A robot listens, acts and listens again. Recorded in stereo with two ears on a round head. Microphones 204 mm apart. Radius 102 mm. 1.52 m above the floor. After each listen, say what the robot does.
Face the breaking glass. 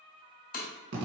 Turn 35° left.
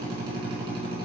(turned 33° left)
Keep listening.
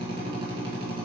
I heard breaking glass, but can't make it out now. It was about 5° left or 110° left.